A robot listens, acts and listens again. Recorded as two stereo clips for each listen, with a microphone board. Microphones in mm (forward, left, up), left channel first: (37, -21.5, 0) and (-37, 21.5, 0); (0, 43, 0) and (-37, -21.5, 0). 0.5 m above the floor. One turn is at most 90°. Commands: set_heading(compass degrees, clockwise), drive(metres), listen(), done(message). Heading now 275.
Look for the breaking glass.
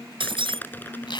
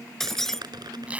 set_heading(185)
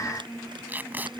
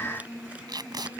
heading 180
set_heading(130)
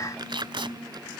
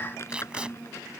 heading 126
done("Facing where the breaking glass came from. I can't hear it now.")